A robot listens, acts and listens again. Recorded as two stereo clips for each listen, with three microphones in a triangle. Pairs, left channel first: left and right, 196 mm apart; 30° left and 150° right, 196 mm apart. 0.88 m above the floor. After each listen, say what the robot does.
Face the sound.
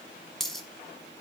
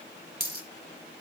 Turn 180° left.
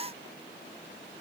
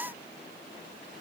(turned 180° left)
I heard a dropped coin from this way, but can't make it out now.